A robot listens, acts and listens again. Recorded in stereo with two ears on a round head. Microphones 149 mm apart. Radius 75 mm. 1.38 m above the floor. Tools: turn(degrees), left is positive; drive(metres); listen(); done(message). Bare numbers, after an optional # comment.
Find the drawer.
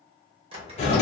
# The drawer: about 35° right or 145° right.
turn(-35)
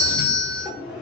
done("Facing the drawer, under 1 m away.")